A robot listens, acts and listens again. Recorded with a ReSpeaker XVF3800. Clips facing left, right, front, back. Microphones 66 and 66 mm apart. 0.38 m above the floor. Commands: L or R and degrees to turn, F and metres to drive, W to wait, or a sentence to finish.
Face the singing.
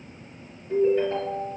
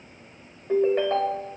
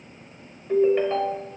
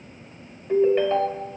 W
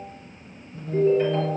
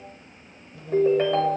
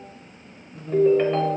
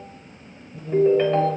L35
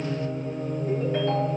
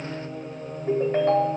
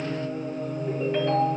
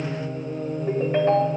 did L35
Found it: singing, straight ahead.